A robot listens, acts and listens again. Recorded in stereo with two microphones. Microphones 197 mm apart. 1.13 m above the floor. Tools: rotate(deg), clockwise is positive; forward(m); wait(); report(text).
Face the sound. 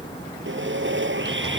rotate(90)
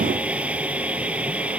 report("Facing the sawing.")